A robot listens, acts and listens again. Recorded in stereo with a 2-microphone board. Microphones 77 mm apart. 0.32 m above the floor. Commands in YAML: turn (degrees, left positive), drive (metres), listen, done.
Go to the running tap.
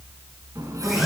turn: -45
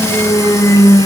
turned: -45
listen: true
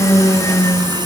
listen: true
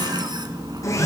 turn: -80
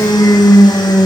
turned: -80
listen: true
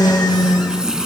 turn: -10
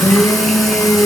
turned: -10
listen: true
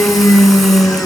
listen: true
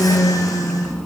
done: "Facing where the running tap came from. I can't hear it now. I did not reach it."